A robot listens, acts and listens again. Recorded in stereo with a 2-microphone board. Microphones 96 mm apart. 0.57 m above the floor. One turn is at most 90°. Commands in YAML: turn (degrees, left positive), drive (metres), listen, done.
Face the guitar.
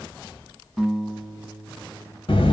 turn: 30
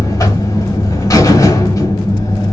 listen: true
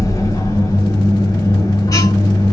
listen: true
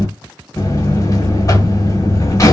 done: "I heard a guitar, but can't make it out now. It was about 30° right or 150° left."